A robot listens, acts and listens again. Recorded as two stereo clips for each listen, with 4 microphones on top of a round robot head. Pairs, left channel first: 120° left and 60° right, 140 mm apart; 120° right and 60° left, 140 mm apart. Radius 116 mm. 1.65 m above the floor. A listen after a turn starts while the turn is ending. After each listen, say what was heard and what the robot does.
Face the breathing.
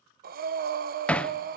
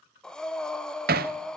The breathing: 35° right. Turn 35° right.
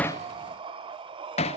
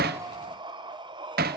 Facing the breathing, 1 to 2 m away.